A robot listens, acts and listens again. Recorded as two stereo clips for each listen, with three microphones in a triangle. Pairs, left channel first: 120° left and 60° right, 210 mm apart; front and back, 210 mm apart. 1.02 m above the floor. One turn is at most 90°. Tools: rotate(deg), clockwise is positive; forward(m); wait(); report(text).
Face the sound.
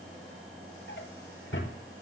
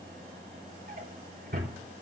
rotate(-90)
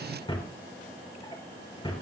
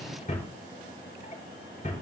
rotate(-55)
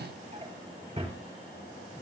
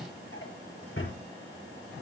report("Facing the drawer.")